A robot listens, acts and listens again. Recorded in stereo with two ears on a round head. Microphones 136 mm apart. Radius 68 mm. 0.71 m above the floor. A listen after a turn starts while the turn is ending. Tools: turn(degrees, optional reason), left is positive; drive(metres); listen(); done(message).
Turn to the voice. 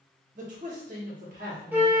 turn(degrees=-60, reason="The man speaking: about 60° right or 120° right.")
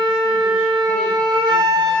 listen()
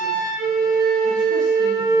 listen()
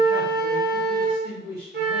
turn(degrees=-70, reason="So it is at 70° right.")
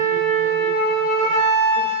listen()
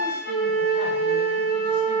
listen()
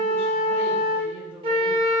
done("Facing where the man speaking came from. I can't hear it now.")